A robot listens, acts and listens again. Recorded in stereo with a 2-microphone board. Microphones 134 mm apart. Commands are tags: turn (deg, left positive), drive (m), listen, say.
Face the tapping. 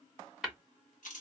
<turn deg="30"/>
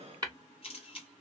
<turn deg="-30"/>
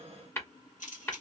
<turn deg="20"/>
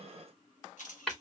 <say>Found it: tapping, straight ahead.</say>